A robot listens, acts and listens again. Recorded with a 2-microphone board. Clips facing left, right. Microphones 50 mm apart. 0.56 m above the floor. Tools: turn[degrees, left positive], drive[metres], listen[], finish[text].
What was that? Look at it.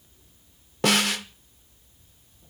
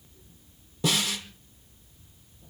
Thought: The snare drum: about 60° left or 120° left.
Action: turn[60]
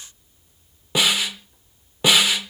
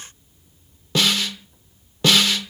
Thought: So it is at 15° left.
Action: turn[15]
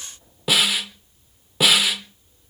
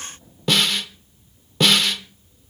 Thought: The snare drum is now 10° left.
Action: turn[10]
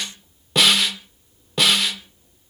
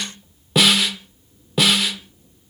Action: finish[Found it: a snare drum, straight ahead.]